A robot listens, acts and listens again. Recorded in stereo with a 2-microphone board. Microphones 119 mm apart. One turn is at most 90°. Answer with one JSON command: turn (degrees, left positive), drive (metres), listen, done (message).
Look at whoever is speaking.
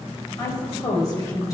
{"turn": 30}
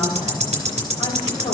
{"listen": true}
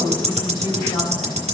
{"turn": 90}
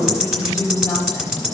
{"turn": 30}
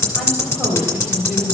{"done": "Found it: a woman speaking, straight ahead, 2 to 4 m away."}